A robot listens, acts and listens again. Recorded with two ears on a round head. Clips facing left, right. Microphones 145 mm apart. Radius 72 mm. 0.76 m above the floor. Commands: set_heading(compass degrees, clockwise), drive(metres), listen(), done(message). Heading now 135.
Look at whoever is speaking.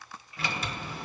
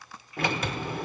listen()
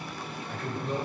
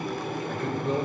set_heading(210)
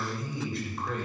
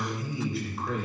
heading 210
done("Found it: a man speaking, straight ahead, 2 to 4 m away.")